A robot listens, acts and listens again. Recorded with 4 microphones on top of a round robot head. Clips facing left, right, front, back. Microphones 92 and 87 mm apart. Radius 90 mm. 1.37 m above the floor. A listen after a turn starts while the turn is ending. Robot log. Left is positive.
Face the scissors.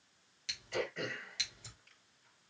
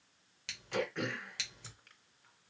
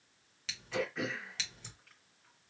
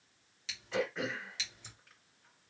note: The scissors: 45° right.
cmd yaw -45
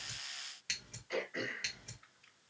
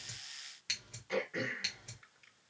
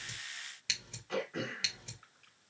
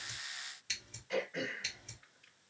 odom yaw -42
end: Facing the scissors, 1 to 2 m away.